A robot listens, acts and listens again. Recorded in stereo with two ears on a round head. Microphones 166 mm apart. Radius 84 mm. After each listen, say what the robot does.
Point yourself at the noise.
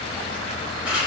Turn 30° right.
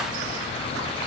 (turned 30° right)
Keep listening.
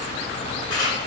Turn 25° left.
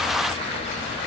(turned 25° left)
Keep listening.
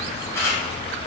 Turn 15° left.
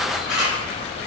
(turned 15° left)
Found it: a camera shutter, straight ahead.